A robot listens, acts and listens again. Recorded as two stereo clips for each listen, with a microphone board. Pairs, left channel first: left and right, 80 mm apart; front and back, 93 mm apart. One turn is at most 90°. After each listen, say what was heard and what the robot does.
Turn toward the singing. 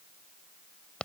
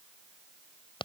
Keep listening.
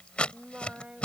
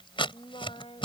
The singing: 15° right. Turn 15° right.
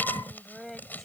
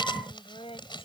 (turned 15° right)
Found it: singing, straight ahead.